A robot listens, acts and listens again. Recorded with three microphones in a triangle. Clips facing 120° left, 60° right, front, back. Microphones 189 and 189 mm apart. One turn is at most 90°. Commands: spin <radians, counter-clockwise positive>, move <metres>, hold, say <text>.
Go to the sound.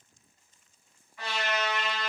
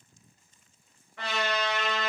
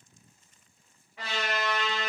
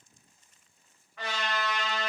spin -1.40
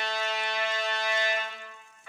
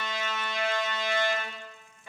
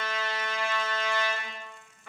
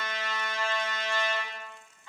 move 1.0
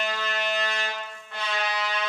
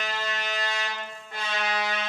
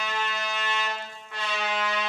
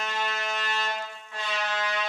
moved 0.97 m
spin -0.26
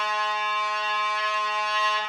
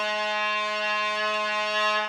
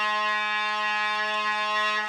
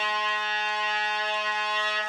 move 1.0
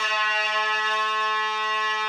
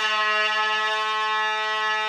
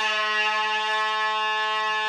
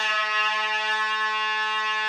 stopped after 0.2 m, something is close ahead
say Arrived at the trumpet, straight ahead.